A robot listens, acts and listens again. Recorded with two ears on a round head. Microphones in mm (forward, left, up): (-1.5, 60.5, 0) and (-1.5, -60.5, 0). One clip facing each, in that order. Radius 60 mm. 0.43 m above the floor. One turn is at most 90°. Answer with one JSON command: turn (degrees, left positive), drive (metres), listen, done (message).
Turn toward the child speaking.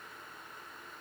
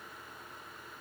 {"listen": true}
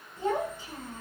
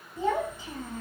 {"turn": -65}
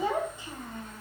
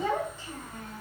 {"turn": 25}
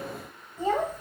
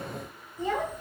{"turn": 35}
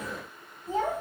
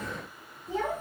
{"turn": 40}
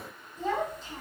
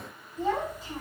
{"done": "Found it: a child speaking, straight ahead."}